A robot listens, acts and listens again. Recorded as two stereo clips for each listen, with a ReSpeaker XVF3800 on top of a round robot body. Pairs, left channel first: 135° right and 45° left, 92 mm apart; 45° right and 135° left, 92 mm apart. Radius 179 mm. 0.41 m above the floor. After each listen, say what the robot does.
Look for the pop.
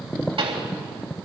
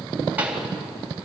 Turn 60° left.
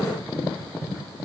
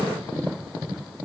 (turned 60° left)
Facing where the pop came from. I can't hear it now.